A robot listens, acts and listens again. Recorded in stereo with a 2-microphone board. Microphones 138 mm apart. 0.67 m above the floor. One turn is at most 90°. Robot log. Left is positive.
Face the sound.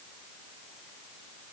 cmd idle
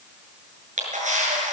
note: The camera shutter: about 70° right or 110° right.
cmd yaw -70
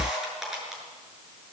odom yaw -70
end: Facing the camera shutter.